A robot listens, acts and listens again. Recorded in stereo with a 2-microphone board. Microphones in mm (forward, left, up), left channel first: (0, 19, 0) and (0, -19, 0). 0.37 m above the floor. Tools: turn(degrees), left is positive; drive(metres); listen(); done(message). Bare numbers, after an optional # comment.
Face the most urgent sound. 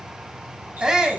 # The shout: about 20° right or 160° right.
turn(-20)
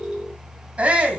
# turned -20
# So it is at 140° right.
turn(-140)
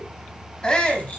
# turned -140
# The shout is now 25° left.
turn(25)
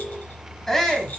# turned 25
# The shout is now 10° left.
turn(10)
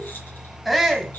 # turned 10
done("Facing the shout, 2 to 4 m away.")